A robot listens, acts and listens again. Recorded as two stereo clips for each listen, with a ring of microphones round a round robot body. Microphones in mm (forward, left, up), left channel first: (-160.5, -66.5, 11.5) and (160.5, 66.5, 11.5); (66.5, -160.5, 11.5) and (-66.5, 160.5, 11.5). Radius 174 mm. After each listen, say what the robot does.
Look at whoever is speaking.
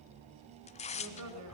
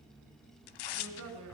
Turn 65° left.
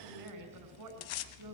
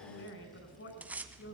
Turn 10° right.
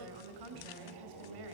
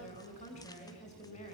Facing the woman speaking, over 4 m away.